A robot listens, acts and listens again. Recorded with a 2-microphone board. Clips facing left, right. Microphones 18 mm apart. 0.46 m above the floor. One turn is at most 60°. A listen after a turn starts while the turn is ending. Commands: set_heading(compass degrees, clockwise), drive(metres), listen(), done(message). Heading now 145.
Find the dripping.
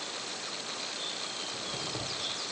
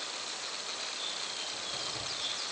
listen()
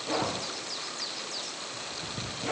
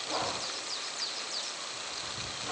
listen()
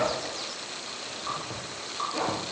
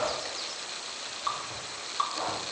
set_heading(190)
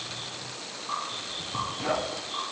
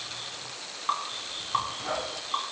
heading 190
set_heading(250)
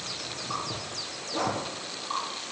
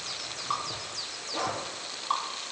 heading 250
set_heading(285)
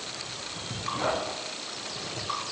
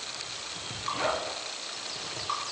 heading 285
done("Facing the dripping.")